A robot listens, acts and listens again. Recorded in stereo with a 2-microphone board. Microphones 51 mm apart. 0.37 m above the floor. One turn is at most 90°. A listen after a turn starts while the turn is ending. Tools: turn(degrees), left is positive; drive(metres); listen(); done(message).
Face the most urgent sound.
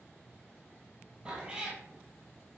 listen()
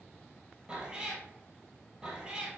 listen()
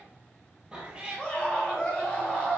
turn(degrees=20)
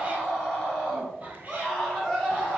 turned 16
done("Found it: a scream, straight ahead.")